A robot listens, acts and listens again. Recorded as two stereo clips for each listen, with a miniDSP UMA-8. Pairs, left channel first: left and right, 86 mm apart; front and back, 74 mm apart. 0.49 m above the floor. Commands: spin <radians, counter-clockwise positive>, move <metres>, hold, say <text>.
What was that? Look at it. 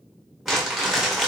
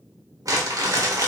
spin -3.05
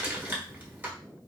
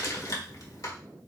spin -0.44
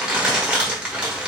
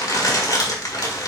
spin -0.26
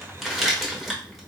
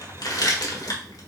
say Found it: crumpling, straight ahead, 1 to 2 m away.